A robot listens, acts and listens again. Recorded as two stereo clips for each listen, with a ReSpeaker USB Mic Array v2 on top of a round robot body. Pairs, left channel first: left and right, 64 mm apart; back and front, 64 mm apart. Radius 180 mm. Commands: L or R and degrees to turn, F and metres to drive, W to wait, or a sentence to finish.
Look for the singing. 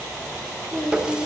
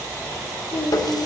L160
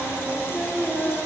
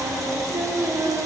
Facing the singing, 2 to 4 m away.